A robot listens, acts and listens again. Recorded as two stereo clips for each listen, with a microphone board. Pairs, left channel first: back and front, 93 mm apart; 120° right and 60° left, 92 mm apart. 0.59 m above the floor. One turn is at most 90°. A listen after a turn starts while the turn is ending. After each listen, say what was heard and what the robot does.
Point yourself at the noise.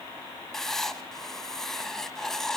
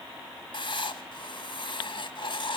The writing: 95° right. Turn 90° right.
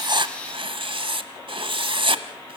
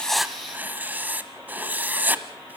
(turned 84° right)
The writing is now 10° right. Turn 10° right.
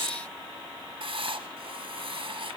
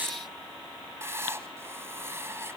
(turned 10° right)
Found it: writing, straight ahead, under 1 m away.